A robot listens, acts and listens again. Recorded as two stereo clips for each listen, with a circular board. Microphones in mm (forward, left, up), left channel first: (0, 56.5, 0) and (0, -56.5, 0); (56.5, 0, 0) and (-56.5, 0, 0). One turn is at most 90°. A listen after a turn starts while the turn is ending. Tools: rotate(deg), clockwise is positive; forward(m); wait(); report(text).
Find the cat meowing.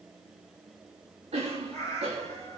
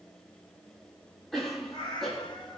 rotate(-35)
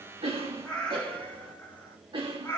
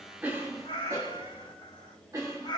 rotate(-30)
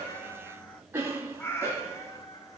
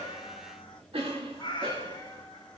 rotate(-35)
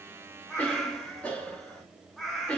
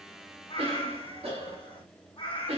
report("Facing the cat meowing, 1 to 2 m away.")